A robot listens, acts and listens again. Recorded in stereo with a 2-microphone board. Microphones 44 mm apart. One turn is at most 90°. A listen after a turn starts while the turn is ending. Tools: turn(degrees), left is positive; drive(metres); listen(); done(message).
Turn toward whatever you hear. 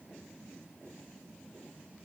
listen()
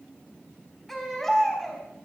turn(degrees=30)
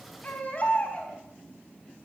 turn(degrees=90)
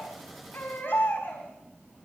turn(degrees=60)
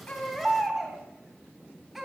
done("Found it: a baby crying, straight ahead, 2 to 4 m away.")